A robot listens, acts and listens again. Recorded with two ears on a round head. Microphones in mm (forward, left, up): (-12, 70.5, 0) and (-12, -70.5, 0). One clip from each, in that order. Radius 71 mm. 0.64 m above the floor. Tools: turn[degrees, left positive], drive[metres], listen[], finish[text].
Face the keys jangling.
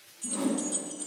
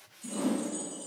Thought: The keys jangling: about 65° left or 115° left.
Action: turn[65]
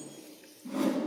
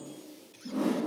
Action: listen[]
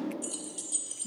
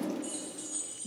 Thought: So it is at 50° left.
Action: turn[50]
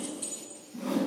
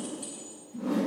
Thought: The keys jangling is now 25° left.
Action: turn[25]
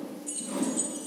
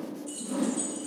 Thought: The keys jangling is now 20° left.
Action: turn[20]
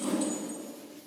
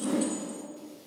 Action: listen[]
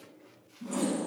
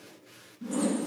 Action: listen[]
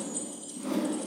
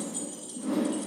Action: finish[Facing the keys jangling.]